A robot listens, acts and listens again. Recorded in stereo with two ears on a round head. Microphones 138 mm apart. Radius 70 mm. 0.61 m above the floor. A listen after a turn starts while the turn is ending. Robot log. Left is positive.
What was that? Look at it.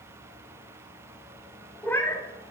cmd yaw +30
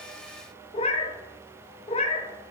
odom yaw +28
note: So it is at 135° left.
cmd yaw +135
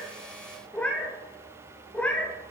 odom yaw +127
note: The cat meowing is now 10° left.
cmd yaw +10
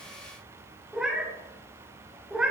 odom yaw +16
end: Facing the cat meowing, under 1 m away.